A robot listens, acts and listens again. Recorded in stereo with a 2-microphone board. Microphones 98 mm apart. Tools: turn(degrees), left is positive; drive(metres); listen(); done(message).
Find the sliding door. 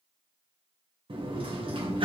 turn(degrees=-65)
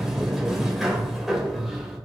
done("Facing the sliding door.")